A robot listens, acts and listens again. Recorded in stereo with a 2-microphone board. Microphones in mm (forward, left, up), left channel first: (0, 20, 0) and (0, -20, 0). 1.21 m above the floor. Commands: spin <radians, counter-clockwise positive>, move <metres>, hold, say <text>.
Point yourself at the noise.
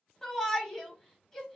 spin 0.52
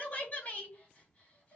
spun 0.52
spin 2.36
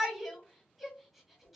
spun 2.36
say Found it: a shout, straight ahead.